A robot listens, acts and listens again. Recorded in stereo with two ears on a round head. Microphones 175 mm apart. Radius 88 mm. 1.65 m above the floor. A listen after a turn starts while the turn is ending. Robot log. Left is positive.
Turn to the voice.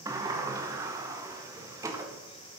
cmd idle
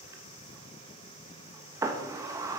cmd idle
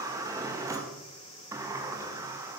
end: I can't make out anyone speaking to turn to.